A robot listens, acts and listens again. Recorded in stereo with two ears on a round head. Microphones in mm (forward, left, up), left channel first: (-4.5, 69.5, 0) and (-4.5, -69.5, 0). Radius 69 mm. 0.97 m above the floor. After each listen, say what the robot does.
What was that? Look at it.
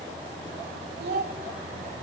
Turn 90° right.
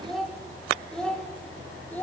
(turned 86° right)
Turn 15° left.
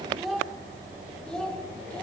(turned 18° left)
Found it: a child speaking, straight ahead.